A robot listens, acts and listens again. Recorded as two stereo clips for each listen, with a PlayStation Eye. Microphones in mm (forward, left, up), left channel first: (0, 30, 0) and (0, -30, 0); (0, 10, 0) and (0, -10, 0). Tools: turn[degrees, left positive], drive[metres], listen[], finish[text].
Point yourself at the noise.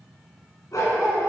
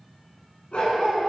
Thought: The dog barking: about 65° left or 115° left.
Action: turn[65]
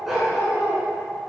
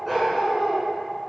Thought: So it is at 10° right.
Action: turn[-10]
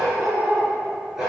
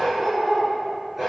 Thought: The dog barking is now 10° right.
Action: turn[-10]
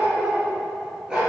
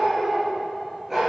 Thought: The dog barking is now 10° right.
Action: turn[-10]
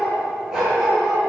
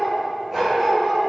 Thought: The dog barking is now 10° right.
Action: turn[-10]
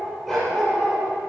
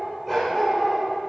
Action: finish[Found it: a dog barking, straight ahead.]